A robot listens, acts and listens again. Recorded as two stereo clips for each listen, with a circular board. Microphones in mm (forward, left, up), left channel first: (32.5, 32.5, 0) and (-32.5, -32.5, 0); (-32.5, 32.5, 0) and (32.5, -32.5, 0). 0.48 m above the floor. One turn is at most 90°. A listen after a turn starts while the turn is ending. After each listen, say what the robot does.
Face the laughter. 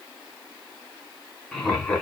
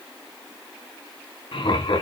Turn 90° left.
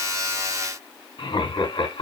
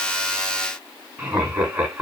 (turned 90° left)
Turn 35° left.
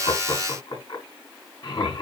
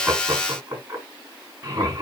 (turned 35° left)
Turn 10° left.
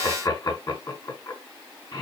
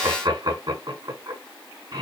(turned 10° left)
Found it: laughter, straight ahead.